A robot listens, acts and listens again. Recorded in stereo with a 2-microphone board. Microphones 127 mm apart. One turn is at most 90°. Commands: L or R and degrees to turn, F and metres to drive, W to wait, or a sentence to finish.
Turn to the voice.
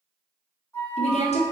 L55
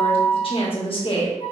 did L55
L55
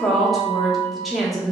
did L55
Found it: a woman speaking, straight ahead.